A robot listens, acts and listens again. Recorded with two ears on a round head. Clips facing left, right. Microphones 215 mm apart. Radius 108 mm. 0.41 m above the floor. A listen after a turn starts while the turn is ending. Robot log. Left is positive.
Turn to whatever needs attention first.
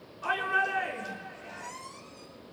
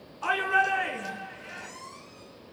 note: The shout: about 70° right or 110° right.
cmd yaw -70
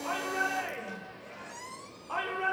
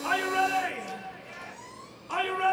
note: So it is at 35° right.
cmd yaw -35
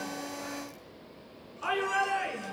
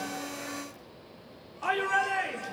note: The shout is now 15° left.
cmd yaw +15
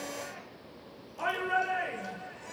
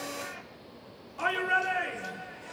end: Facing the shout.